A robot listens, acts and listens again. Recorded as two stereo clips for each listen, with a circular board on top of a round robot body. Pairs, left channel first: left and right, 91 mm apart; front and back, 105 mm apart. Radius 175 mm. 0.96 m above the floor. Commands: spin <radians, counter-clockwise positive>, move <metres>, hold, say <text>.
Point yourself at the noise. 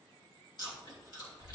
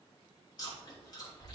spin 0.87
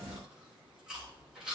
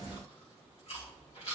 spin -0.17
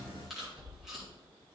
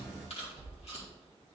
say Found it: chewing, straight ahead.